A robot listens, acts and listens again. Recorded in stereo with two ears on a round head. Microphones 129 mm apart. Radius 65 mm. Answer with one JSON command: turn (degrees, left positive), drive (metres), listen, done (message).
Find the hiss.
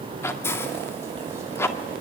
{"turn": 15}
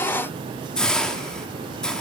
{"done": "Facing the hiss."}